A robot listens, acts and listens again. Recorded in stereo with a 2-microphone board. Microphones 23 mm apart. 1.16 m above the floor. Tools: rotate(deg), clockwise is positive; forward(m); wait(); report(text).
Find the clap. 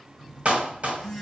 rotate(90)
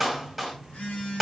report("Facing the clap, 1 to 2 m away.")